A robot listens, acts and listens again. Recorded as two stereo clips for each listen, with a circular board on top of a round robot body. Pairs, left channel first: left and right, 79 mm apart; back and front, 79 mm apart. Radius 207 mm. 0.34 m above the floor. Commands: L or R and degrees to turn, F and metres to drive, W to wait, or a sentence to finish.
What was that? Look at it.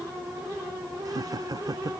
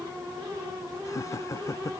R130
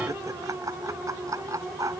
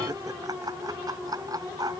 R40
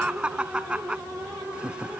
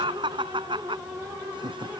R10
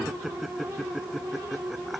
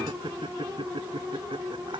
Found it: laughter, straight ahead.